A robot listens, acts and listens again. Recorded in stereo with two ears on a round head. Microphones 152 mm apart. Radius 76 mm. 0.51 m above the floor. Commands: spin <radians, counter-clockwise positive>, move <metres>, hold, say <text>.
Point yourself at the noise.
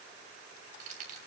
spin -0.79
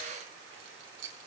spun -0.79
spin -1.75
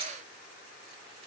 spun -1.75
hold
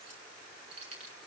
spin -0.61
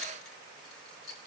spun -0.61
say Found it: keys jangling, straight ahead, over 4 m away.